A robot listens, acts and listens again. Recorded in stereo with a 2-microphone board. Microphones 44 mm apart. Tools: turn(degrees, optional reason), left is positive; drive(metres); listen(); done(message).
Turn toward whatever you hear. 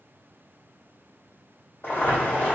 turn(degrees=50, reason="The boiling: about 50° left or 130° left.")
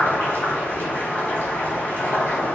turn(degrees=75, reason="So it is at 75° left.")
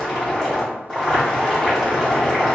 turn(degrees=20, reason="The boiling is now 20° left.")
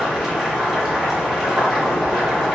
done("Found it: boiling, straight ahead, 1 to 2 m away.")